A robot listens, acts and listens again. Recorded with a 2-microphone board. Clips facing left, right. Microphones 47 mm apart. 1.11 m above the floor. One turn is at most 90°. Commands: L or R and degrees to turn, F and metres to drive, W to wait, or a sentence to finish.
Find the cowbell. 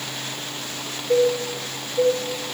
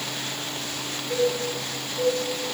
L60
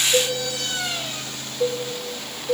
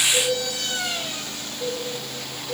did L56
L60
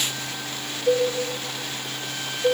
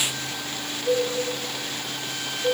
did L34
L30
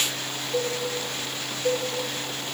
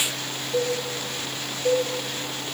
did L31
Found it: a cowbell, straight ahead, 2 to 4 m away.